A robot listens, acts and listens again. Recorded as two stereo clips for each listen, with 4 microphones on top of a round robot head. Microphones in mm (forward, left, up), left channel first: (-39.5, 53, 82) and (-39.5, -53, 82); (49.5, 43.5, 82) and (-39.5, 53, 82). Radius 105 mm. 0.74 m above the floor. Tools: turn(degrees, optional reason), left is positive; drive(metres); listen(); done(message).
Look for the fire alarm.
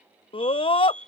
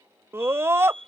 turn(degrees=170, reason="The fire alarm: 170° left.")
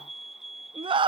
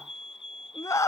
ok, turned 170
done("Facing the fire alarm.")